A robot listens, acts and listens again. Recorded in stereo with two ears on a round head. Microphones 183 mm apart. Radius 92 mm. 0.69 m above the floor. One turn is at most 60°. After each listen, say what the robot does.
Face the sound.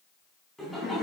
Turn 30° left.
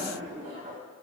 Turn 35° right.
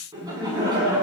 Turn 20° right.
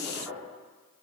Found it: laughter, straight ahead.